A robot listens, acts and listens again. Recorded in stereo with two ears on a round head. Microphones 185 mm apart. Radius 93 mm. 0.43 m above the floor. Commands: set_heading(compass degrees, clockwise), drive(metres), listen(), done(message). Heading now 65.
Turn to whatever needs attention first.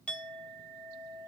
listen()
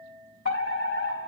set_heading(5)
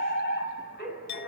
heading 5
set_heading(315)
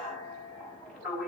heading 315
done("Found it: a fire alarm, straight ahead.")